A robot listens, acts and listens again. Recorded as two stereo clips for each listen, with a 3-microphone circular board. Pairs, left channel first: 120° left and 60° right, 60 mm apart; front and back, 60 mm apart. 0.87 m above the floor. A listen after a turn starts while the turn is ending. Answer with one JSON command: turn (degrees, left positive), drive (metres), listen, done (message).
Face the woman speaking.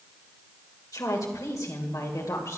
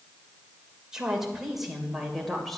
{"turn": 90}
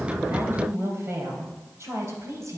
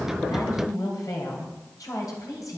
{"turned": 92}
{"turn": -20}
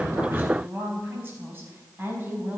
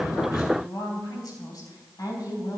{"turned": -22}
{"done": "Found it: a woman speaking, straight ahead, over 4 m away."}